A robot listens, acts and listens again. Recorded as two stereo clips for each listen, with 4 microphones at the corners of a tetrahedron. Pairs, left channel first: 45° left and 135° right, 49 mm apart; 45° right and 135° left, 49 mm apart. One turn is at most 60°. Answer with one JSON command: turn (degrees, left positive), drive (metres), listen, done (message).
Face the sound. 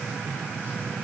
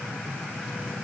{"listen": true}
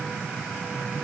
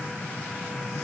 {"listen": true}
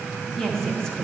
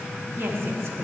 {"turn": 60}
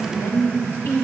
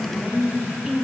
{"turn": 55}
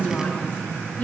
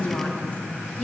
{"done": "Facing the woman speaking."}